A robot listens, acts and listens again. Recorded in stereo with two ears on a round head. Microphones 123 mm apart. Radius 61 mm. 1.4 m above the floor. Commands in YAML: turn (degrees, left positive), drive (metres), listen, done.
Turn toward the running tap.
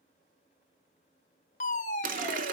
turn: -60
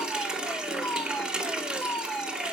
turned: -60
done: "Facing the running tap."